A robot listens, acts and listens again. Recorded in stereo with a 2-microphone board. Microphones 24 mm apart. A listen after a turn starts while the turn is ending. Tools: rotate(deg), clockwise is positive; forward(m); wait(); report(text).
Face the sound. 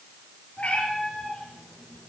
rotate(-90)
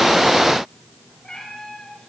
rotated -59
rotate(-35)
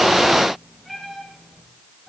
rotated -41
report("Found it: a cat meowing, straight ahead, over 4 m away.")